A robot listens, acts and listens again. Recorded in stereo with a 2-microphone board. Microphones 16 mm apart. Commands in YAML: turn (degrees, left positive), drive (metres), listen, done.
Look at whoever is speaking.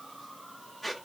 listen: true
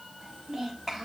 turn: -40
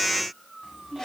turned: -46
turn: -100
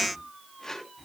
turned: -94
done: "Found it: a child speaking, straight ahead."